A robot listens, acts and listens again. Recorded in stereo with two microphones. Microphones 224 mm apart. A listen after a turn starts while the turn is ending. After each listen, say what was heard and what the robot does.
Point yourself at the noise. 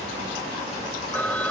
Turn 30° left.
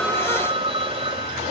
So it is at 25° right. Turn 25° right.
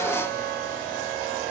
Keep listening.
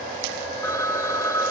The phone ringing is now 15° left. Turn 15° left.
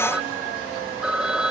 Facing the phone ringing.